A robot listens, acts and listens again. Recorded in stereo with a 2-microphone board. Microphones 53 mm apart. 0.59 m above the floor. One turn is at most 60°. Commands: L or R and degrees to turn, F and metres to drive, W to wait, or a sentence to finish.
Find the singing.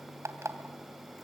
W
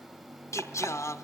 L60
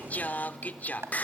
L35
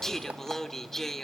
L10
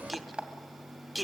Facing the singing.